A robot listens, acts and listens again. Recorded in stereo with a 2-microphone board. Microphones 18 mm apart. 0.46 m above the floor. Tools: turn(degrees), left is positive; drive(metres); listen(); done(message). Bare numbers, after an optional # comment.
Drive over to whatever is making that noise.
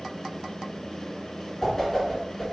turn(30)
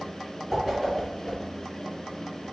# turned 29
# So it is at 15° right.
turn(-15)
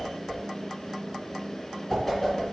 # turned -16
drive(1.0)
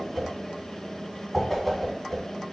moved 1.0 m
drive(1.0)
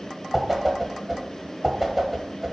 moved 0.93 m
# The whoosh is now 10° right.
turn(-10)
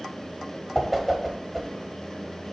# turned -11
drive(1.0)
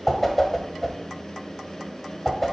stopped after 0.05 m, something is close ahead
done("I am next to the whoosh.")